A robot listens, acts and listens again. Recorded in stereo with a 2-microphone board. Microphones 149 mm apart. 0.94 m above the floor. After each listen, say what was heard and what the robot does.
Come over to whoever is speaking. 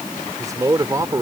The man speaking: about 25° right or 155° right. Turn 25° right.
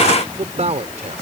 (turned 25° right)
So it is at 130° right. Turn 130° right.
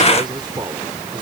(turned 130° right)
The man speaking is now 30° right. Turn 30° right.
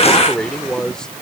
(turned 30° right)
Drive 1.0 m forward.
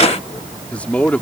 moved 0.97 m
The man speaking is now 10° left. Turn 10° left.
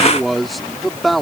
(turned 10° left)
Drive 1.0 m forward.
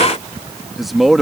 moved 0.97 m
Drive 1.0 m forward.
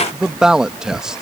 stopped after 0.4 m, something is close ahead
Arrived at the man speaking, straight ahead.